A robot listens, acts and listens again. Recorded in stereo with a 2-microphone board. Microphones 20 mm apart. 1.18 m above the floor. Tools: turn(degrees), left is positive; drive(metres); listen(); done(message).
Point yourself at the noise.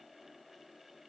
listen()
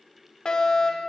turn(degrees=50)
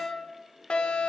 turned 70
turn(degrees=60)
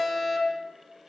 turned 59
done("Found it: a fire alarm, straight ahead, over 4 m away.")